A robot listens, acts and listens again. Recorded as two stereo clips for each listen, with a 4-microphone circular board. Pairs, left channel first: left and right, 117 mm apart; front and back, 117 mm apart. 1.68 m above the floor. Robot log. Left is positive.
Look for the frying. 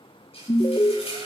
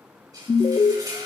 note: The frying: 125° left.
cmd yaw +125
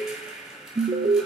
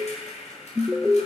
end: Facing the frying, over 4 m away.